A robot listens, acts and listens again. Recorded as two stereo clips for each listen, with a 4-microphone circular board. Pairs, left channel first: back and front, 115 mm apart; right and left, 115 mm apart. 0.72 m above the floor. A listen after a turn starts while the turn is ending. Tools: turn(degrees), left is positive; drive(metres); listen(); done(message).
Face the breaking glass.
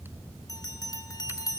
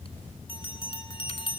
listen()
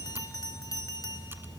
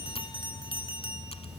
listen()
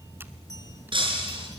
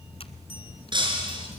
turn(degrees=45)
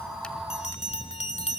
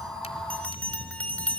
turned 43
done("Facing where the breaking glass came from. I can't hear it now.")